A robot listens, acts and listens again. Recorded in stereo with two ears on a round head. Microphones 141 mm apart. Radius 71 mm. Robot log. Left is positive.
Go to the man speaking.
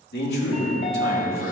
cmd yaw +90
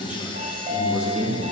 note: So it is at 10° right.
cmd yaw -10
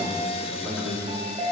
cmd fwd 1.0
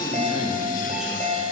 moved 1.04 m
cmd fwd 1.0
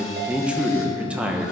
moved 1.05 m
note: The man speaking is now 10° right.
cmd yaw -10
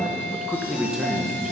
cmd fwd 1.0
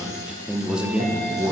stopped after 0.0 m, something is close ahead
end: I am next to the man speaking.